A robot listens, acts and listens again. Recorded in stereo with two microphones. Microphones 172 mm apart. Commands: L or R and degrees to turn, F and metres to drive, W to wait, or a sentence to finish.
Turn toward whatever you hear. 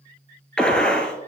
L30
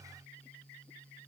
W
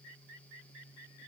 I heard a gunshot, but can't make it out now. It was about 25° right or 145° left.